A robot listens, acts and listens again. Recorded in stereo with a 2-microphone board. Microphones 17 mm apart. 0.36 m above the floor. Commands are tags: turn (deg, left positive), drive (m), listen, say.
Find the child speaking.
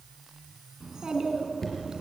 <turn deg="-40"/>
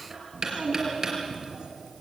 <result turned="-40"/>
<turn deg="-100"/>
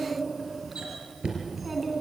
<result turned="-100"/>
<say>Found it: a child speaking, straight ahead.</say>